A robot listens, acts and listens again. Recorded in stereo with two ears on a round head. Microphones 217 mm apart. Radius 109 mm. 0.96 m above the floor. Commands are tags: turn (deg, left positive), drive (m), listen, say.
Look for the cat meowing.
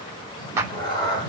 <turn deg="20"/>
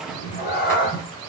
<turn deg="140"/>
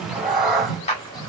<say>Facing the cat meowing, 2 to 4 m away.</say>